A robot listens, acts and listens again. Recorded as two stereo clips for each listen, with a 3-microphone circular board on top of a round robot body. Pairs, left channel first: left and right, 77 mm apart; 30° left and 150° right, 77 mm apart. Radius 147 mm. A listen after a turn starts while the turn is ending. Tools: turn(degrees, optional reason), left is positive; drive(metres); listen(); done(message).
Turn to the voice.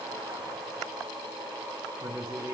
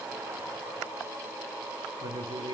turn(degrees=-140, reason="The man speaking: 140° right.")
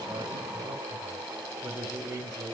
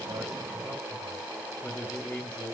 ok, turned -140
turn(degrees=-40, reason="The man speaking is now 40° right.")
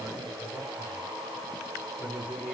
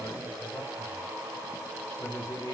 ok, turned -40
turn(degrees=-20, reason="The man speaking is now 20° right.")
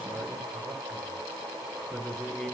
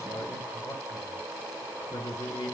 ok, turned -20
done("Found it: a man speaking, straight ahead.")